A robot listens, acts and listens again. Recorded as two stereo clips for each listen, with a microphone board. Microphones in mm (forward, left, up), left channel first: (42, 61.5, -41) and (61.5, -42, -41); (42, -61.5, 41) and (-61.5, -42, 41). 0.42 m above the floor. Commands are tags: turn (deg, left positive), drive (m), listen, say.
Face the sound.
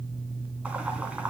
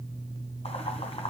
<say>Found it: boiling, straight ahead.</say>